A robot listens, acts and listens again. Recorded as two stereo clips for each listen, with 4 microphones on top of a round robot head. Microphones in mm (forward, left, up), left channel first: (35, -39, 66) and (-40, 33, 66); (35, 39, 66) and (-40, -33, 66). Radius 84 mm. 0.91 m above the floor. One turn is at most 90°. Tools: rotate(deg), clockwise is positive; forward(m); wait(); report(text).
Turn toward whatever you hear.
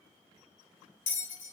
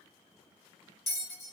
rotate(45)
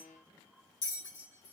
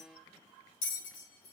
rotate(-15)
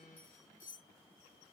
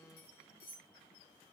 report("Facing the bell.")